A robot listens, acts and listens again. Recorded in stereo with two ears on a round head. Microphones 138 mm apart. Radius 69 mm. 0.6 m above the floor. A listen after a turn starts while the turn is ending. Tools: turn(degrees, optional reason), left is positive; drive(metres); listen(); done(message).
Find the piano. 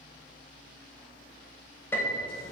turn(degrees=30)
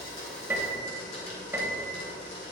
turn(degrees=-15, reason="So it is at 15° right.")
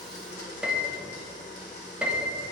done("Facing the piano, under 1 m away.")